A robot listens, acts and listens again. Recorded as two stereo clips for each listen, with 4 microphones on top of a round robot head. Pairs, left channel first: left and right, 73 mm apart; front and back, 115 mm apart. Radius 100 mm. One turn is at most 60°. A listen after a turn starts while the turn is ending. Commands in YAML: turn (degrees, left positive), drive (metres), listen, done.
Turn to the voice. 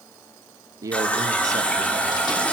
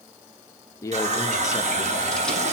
turn: -60
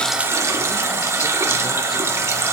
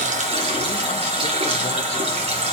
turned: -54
listen: true
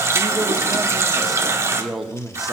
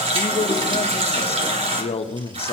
done: "Found it: a man speaking, straight ahead."